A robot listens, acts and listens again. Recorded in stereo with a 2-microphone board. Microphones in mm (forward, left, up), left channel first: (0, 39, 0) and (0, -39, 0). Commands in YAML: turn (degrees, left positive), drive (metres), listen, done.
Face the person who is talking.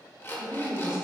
turn: -30
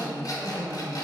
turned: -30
turn: -20
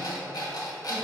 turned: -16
listen: true
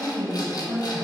turn: -15
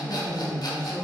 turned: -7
turn: -20
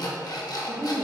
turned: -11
turn: -25
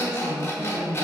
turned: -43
turn: -120
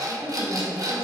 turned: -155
turn: 40
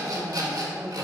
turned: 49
done: "Found it: a woman speaking, straight ahead, 2 to 4 m away."